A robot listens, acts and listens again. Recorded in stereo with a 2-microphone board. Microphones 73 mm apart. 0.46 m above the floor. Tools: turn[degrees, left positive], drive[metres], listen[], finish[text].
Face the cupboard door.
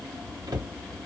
Thought: The cupboard door: about 60° right or 120° right.
Action: turn[-60]
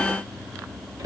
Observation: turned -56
Thought: So it is at 60° right.
Action: turn[-60]
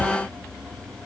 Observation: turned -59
Action: finish[Found it: a cupboard door, straight ahead.]